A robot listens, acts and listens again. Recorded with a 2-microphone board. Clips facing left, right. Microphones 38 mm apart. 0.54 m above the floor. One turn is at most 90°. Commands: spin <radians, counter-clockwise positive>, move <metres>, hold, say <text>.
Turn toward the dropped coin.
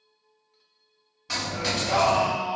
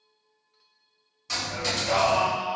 spin 0.26
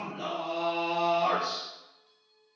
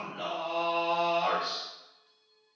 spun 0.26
hold
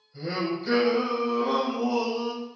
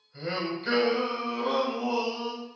say I heard a dropped coin, but can't make it out now. It was about straight ahead or 150° left.